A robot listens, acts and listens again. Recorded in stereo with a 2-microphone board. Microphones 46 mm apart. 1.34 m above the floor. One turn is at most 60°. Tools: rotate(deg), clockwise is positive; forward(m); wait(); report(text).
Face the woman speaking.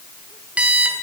wait()
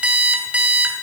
wait()
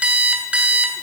report("I can't make out a woman speaking, only an alarm clock.")